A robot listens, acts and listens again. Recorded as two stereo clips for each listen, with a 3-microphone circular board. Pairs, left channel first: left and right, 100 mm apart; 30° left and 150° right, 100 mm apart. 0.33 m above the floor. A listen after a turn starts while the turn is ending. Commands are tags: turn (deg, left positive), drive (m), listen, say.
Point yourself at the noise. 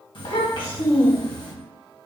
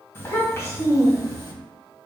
<turn deg="75"/>
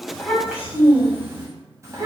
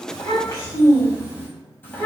<turn deg="-40"/>
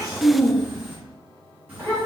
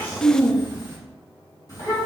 <turn deg="-20"/>
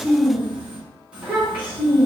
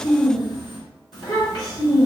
<turn deg="-10"/>
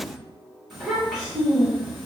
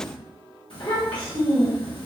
<say>Facing the child speaking, 2 to 4 m away.</say>